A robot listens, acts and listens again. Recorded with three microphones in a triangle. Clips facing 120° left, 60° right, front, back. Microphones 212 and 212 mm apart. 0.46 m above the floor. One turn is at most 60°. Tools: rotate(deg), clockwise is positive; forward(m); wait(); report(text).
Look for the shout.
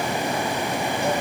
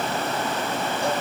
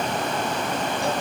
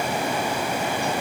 wait()
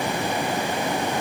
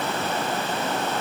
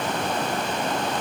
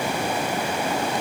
wait()
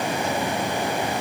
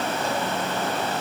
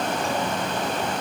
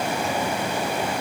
report("I can't make out a shout.")